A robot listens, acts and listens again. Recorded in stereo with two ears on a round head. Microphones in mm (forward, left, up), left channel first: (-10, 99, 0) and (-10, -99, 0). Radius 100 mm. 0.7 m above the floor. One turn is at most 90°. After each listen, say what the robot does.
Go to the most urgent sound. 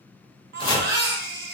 Turn 45° right.
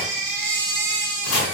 Turn 85° right.
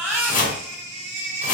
Turn 15° right.
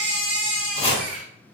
Drive 1.0 m forward.
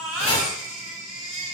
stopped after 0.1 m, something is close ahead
Turn 10° right.
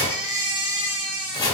Something is in my way. I am facing the baby crying but have not reached it.